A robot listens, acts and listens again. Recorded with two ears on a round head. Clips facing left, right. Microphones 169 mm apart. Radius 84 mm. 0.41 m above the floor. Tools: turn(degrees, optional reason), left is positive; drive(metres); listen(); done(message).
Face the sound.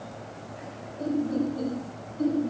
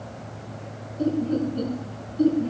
turn(degrees=-50, reason="The laughter: about 50° right or 130° right.")
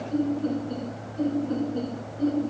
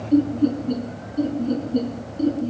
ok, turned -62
turn(degrees=-50, reason="So it is at 50° right.")
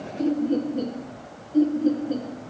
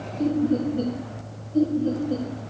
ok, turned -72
turn(degrees=30, reason="The laughter is now 30° left.")
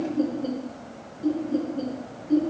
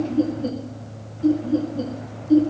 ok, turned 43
turn(degrees=-10, reason="The laughter is now 10° right.")
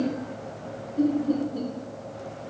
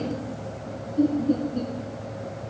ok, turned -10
done("Facing the laughter, over 4 m away.")